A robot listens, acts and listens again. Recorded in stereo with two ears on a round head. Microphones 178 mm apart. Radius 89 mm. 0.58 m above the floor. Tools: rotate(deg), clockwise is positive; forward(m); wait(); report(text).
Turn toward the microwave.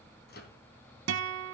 rotate(-55)
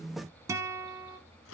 rotate(-75)
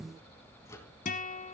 rotate(-15)
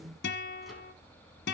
wait()
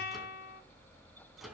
report("Facing the microwave, 2 to 4 m away.")